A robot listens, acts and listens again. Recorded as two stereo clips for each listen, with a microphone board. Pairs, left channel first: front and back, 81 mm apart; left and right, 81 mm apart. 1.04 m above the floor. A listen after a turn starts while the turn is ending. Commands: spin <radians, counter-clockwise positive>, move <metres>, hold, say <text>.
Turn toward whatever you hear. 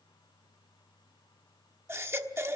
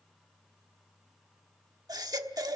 spin -2.18
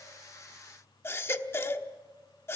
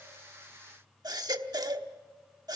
spin -1.05
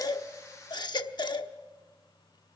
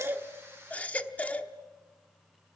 spin 0.35
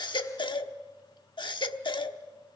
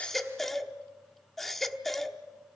say Facing the baby crying, 1 to 2 m away.